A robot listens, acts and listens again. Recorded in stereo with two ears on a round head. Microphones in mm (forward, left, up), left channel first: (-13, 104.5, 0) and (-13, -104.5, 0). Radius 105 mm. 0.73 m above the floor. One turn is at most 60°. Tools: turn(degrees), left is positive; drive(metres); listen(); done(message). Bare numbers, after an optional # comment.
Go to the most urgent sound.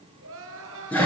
# The crying: about 60° right or 120° right.
turn(-60)
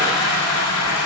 listen()
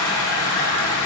listen()
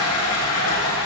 done("I heard crying, but can't make it out now. It was about straight ahead or 60° right. I did not reach it.")